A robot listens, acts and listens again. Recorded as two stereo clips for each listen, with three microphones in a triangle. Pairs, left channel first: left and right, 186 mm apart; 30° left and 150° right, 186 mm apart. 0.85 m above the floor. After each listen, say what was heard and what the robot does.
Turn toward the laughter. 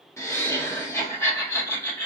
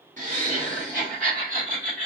The laughter: 165° left. Turn 165° left.
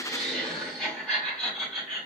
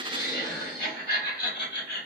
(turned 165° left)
Facing the laughter.